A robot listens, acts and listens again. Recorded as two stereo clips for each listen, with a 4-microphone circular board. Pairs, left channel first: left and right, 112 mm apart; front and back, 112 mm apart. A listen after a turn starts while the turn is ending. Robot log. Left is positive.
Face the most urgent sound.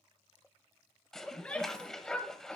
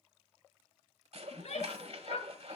note: The shout: 10° left.
cmd yaw +10
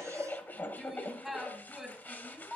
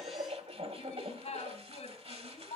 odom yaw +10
end: Found it: a shout, straight ahead, 2 to 4 m away.